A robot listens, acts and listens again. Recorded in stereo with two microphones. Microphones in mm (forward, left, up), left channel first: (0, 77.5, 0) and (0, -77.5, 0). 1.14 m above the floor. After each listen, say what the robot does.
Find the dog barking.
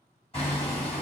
Keep listening.
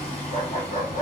Turn 60° left.
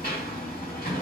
Keep listening.
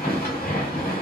Keep listening.
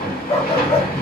Turn 45° left.
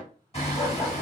Keep listening.
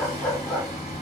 Found it: a dog barking, straight ahead.